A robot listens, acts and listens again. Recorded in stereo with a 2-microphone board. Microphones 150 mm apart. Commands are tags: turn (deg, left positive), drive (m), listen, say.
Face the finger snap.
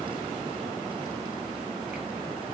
<listen/>
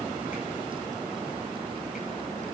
<listen/>
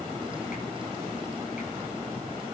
<say>I can't make out a finger snap to turn to.</say>